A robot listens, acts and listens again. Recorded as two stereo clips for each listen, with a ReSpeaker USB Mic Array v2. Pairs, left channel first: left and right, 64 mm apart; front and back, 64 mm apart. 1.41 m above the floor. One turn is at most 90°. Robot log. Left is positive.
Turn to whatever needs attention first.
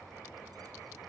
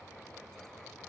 cmd idle
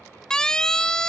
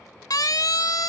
note: The siren: 10° left.
cmd yaw +10
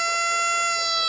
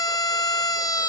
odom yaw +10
end: Found it: a siren, straight ahead.